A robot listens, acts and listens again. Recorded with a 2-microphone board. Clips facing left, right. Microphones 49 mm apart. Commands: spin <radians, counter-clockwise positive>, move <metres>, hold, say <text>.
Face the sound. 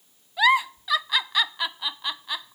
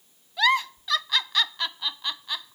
spin 0.52
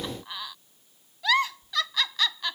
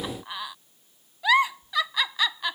spin -0.35
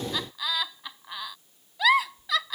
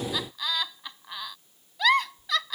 say Facing the giggle.